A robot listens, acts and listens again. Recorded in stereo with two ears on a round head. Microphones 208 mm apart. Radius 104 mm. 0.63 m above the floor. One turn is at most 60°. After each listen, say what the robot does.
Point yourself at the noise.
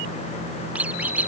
Turn 30° right.
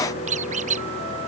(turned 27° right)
Turn 60° right.
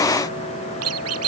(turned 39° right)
Turn 60° right.
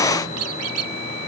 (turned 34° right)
Turn 60° right.
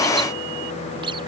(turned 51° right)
Turn 20° right.
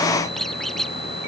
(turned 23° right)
Facing the squeak.